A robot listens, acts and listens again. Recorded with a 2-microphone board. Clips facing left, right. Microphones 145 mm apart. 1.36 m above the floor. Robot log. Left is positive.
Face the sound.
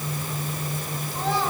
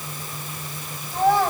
note: The child speaking: about 55° right or 125° right.
cmd yaw -55
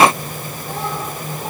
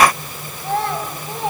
note: So it is at 75° right.
cmd yaw -75
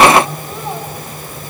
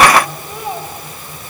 note: The child speaking is now 15° right.
cmd yaw -15
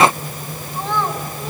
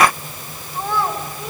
note: The child speaking is now 10° right.
cmd yaw -10
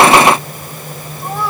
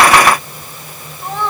end: Found it: a child speaking, straight ahead, over 4 m away.